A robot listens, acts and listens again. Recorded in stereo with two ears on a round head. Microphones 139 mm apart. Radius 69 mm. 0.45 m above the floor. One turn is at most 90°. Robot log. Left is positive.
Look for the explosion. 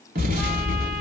note: The explosion: about 55° right or 125° right.
cmd yaw -55
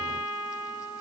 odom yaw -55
cmd idle
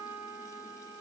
end: I heard an explosion, but can't make it out now. It was about straight ahead or 70° right.